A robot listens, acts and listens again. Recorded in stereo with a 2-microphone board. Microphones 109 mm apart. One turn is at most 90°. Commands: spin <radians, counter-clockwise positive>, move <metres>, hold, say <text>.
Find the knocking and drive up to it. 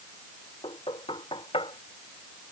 spin 0.96
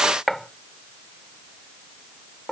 move 1.0
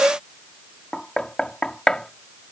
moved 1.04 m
move 1.0
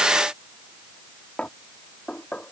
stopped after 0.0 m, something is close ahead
spin 0.26
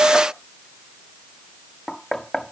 say I am next to the knocking.